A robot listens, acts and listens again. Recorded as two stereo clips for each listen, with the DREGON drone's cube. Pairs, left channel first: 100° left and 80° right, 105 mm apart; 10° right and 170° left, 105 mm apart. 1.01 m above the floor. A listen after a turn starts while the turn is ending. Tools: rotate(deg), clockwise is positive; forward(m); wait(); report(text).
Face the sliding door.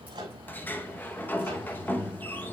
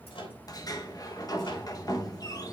rotate(-30)
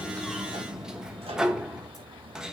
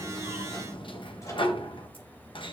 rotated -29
report("Found it: a sliding door, straight ahead.")